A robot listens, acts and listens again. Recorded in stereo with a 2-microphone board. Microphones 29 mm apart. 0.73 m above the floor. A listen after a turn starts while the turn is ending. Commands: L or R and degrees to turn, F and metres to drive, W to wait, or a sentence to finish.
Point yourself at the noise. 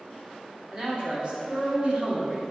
R45
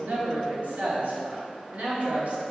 R45
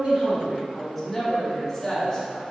L10
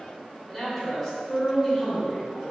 Facing the man speaking, 2 to 4 m away.